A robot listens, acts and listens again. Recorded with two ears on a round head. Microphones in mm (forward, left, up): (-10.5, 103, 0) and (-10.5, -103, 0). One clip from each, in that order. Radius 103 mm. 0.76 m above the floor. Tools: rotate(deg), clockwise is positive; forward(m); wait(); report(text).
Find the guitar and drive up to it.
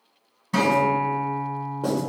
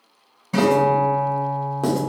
rotate(-30)
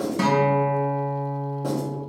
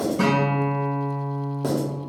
rotate(-150)
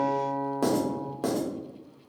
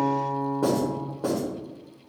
forward(1.0)
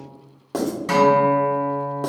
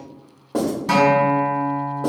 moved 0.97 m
rotate(-10)
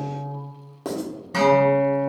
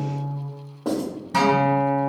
forward(1.0)
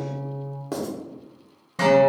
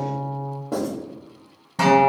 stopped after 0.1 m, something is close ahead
report("Arrived at the guitar, straight ahead.")